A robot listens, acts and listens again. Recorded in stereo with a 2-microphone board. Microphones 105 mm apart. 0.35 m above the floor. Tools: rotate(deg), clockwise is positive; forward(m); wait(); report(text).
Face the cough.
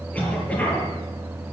rotate(-30)
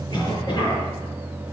rotate(-140)
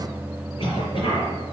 rotate(-55)
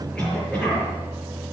rotate(-10)
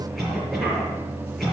report("Found it: a cough, straight ahead, over 4 m away.")